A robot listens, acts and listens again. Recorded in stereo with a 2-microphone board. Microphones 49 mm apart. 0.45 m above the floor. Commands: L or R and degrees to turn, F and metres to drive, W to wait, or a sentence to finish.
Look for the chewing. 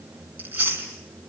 R35
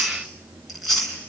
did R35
Found it: chewing, straight ahead.